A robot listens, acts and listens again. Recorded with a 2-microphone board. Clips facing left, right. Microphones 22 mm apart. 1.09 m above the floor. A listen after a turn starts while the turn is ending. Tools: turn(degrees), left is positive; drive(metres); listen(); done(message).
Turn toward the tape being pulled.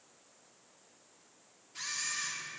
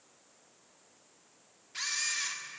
listen()
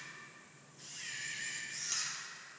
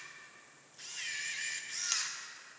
listen()
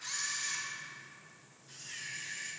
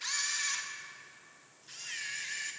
done("I can't make out tape being pulled, only a camera shutter.")